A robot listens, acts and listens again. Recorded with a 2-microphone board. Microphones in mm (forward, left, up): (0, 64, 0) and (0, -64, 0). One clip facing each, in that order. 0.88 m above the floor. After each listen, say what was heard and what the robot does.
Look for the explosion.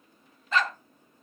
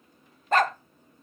Keep listening.
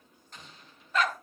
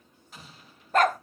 Turn 30° right.
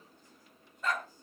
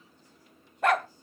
Keep listening.
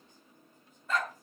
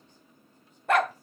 I heard an explosion, but can't make it out now. It was about 25° left or 145° right.